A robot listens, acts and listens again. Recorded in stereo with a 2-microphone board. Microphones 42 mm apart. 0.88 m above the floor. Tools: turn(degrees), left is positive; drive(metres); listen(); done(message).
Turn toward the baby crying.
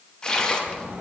listen()
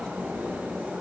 listen()
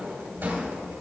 done("I can't make out a baby crying to turn to.")